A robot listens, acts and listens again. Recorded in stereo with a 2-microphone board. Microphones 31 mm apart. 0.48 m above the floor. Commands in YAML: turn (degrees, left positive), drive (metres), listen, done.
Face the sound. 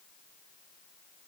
listen: true
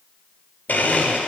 turn: 70
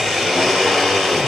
turn: 10
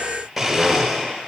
done: "Facing the blender, 1 to 2 m away."